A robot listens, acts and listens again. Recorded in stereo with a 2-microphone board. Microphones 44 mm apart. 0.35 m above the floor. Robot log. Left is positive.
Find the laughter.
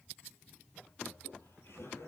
note: The laughter: about 75° left or 105° left.
cmd yaw +75
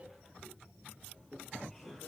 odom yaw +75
end: Facing the laughter.